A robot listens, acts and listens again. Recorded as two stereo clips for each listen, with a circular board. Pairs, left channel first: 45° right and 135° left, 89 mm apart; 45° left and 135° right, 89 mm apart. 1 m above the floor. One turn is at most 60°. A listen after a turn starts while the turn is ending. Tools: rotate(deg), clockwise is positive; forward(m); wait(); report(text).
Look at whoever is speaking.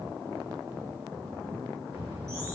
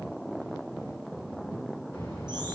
rotate(-60)
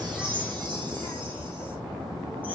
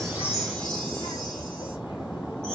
rotate(-45)
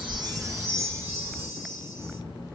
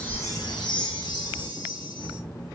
report("Found it: a child speaking, straight ahead.")